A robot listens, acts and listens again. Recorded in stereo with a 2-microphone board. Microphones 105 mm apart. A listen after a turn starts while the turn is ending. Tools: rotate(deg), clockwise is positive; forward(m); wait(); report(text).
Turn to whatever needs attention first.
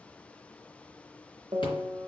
wait()
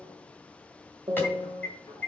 rotate(-20)
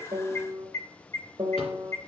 rotate(-140)
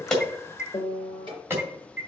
rotate(30)
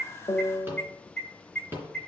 rotate(-10)
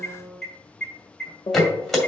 report("Found it: an alarm, straight ahead.")